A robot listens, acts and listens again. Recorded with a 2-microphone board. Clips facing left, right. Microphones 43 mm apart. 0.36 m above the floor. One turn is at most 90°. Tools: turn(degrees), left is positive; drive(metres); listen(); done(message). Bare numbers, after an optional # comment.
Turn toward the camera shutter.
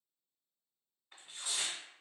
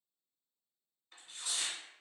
listen()
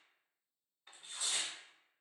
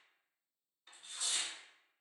listen()
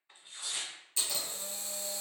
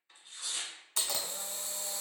turn(-90)
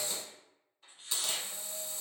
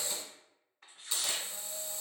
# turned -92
done("Found it: a camera shutter, straight ahead, under 1 m away.")